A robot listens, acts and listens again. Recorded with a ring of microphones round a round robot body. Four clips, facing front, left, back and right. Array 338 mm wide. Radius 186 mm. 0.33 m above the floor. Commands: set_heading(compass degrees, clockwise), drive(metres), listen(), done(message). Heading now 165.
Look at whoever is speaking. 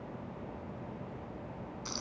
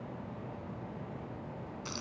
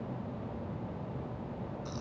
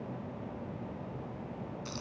listen()
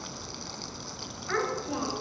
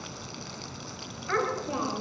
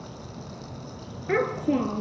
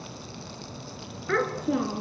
set_heading(315)
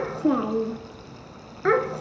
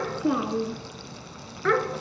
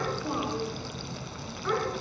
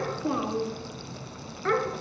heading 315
set_heading(300)
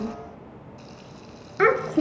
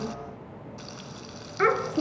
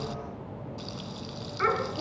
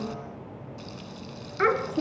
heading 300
done("Found it: a child speaking, straight ahead.")